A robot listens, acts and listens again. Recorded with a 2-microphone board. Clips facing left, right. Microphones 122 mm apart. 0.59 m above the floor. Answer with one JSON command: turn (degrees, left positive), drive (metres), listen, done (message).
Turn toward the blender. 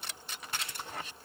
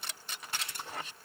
{"listen": true}
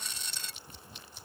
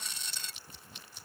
{"listen": true}
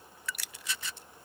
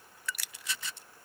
{"done": "I can't make out a blender."}